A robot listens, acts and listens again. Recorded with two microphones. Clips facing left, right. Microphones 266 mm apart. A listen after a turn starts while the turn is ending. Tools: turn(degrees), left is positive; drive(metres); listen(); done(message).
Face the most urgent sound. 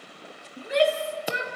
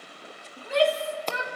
turn(degrees=20)
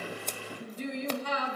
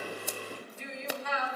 turn(degrees=140)
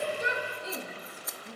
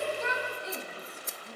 done("Facing the shout.")